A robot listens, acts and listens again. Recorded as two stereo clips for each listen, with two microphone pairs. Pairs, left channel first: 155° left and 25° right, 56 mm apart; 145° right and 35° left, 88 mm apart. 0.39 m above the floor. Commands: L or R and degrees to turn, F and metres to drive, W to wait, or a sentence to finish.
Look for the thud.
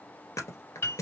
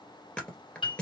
L140
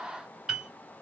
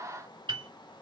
I heard a thud from this way, but can't make it out now.